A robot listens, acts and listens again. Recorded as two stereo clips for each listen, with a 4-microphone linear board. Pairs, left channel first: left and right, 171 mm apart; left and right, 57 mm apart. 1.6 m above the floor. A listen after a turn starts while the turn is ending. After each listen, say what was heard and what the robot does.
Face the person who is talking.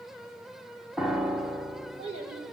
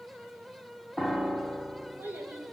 The child speaking: about 35° right or 145° right. Turn 35° right.
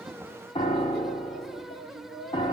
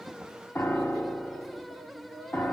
Found it: a child speaking, straight ahead.